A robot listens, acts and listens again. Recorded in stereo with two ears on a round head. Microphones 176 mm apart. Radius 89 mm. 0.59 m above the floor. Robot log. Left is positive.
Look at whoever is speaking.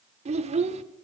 note: The child speaking: about 35° right or 145° right.
cmd yaw -35
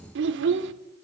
note: So it is at 110° right.
cmd yaw -110
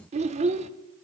note: The child speaking is now 35° right.
cmd yaw -35
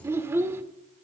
note: The child speaking is now 15° right.
cmd yaw -15
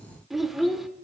end: Facing the child speaking, under 1 m away.